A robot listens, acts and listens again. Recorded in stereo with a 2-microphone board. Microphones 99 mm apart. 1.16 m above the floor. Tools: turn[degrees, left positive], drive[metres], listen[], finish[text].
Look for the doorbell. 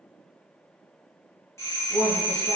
Thought: The doorbell: about 30° left or 150° left.
Action: turn[30]
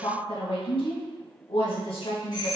Thought: So it is at 115° left.
Action: turn[115]
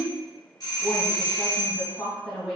Thought: The doorbell is now 50° left.
Action: turn[50]
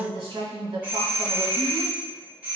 Thought: The doorbell is now 20° right.
Action: turn[-20]
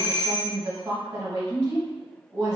Action: finish[Found it: a doorbell, straight ahead.]